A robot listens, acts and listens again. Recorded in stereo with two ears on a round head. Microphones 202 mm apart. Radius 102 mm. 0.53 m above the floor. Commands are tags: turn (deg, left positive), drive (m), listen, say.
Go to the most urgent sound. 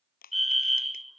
<turn deg="30"/>
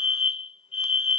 <turn deg="150"/>
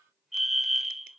<drive m="1.0"/>
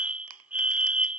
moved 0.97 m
<turn deg="-10"/>
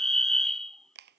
<drive m="1.0"/>
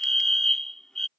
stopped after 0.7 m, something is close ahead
<say>Arrived at the fire alarm, straight ahead.</say>